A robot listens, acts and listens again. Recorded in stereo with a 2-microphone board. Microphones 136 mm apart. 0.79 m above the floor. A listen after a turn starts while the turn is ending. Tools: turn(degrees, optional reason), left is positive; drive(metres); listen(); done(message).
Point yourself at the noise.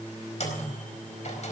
turn(degrees=55, reason="The microwave: about 55° left or 125° left.")
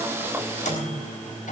turn(degrees=70, reason="So it is at 70° left.")
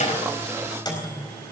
turn(degrees=30, reason="The microwave is now 30° left.")
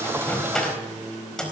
done("Found it: a microwave, straight ahead, over 4 m away.")